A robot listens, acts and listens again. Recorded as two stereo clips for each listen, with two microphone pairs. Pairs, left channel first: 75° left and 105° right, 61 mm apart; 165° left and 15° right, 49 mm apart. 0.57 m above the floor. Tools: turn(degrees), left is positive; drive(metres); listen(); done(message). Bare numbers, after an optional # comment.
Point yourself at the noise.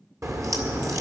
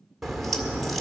# The crack: 110° right.
turn(-110)
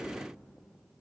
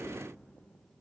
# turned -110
done("Facing where the crack came from. I can't hear it now.")